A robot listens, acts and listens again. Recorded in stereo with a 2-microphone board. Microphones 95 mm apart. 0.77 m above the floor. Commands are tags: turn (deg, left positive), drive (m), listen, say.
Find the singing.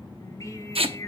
<turn deg="35"/>
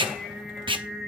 <say>Facing the singing.</say>